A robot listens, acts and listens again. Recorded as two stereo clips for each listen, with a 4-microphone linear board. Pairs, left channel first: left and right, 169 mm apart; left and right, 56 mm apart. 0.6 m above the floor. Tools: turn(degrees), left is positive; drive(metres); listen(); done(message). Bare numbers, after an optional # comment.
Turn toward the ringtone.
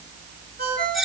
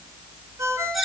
# The ringtone: about 70° right or 110° right.
turn(-70)
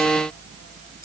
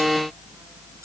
listen()
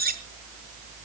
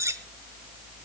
listen()
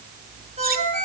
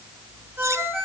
# So it is at 45° right.
turn(-45)
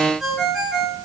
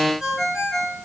done("Found it: a ringtone, straight ahead.")